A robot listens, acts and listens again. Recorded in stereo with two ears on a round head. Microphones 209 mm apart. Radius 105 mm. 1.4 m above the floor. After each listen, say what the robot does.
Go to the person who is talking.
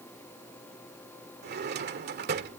Keep listening.
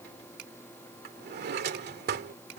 Keep listening.
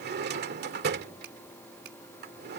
I can't make out anyone speaking, only a finger snap and a drawer.